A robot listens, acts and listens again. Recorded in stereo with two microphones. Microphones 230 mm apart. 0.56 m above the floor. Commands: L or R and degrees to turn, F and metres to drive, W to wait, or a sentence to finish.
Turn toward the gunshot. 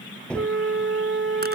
L30
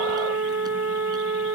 W
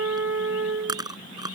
I heard a gunshot, but can't make it out now. It was about 25° right or 145° left.